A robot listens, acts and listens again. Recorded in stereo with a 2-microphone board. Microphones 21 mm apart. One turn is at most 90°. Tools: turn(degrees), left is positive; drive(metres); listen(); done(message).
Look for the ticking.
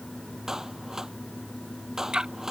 turn(degrees=-35)
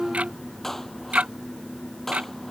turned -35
turn(degrees=-90)
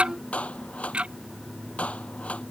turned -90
turn(degrees=-55)
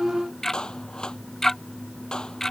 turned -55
turn(degrees=20)
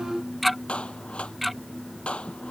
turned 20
done("Facing the ticking.")